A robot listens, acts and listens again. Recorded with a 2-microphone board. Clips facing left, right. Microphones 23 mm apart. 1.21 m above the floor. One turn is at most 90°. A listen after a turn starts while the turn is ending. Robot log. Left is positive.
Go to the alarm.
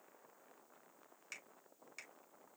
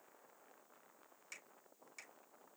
cmd idle
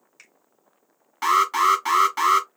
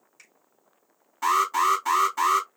note: The alarm: about 60° left or 120° left.
cmd yaw +60
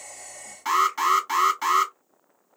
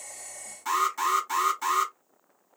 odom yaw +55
note: So it is at 45° left.
cmd yaw +45
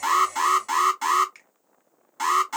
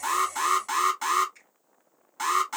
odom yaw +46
cmd fwd 1.0
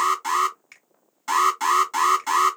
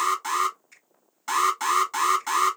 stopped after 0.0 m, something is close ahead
end: Blocked. The alarm is further on, straight ahead.